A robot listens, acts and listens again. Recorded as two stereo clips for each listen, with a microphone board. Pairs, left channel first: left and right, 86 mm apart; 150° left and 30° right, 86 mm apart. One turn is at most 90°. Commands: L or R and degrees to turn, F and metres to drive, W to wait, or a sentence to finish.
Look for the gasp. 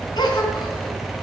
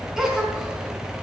L55
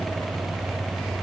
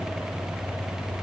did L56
I heard a gasp from this way, but can't make it out now.